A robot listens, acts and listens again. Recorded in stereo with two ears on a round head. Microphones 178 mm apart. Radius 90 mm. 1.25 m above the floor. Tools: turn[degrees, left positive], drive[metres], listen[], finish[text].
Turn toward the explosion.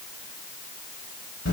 Action: listen[]
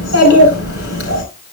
Action: listen[]
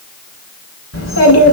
Action: finish[I can't make out an explosion to turn to.]